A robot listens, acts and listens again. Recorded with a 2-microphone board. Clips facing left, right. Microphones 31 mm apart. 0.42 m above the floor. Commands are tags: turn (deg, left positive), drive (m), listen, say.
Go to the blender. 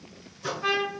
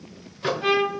<listen/>
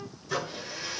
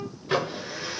<turn deg="-20"/>
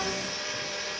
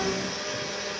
<drive m="1.0"/>
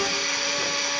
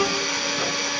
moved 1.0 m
<drive m="1.0"/>
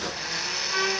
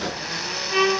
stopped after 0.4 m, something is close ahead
<turn deg="-10"/>
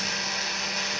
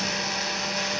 <say>I am next to the blender.</say>